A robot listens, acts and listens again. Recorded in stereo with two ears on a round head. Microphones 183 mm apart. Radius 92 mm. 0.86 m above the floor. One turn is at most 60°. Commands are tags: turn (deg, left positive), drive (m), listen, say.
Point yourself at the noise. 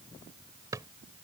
<turn deg="-15"/>
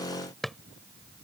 <say>Facing the drawer.</say>